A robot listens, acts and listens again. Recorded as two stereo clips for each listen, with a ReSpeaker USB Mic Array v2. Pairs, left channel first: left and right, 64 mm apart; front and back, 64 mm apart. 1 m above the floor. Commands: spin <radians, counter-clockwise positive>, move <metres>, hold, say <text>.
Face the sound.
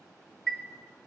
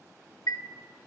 spin 0.17
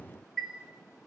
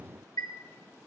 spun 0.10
say Facing the chime.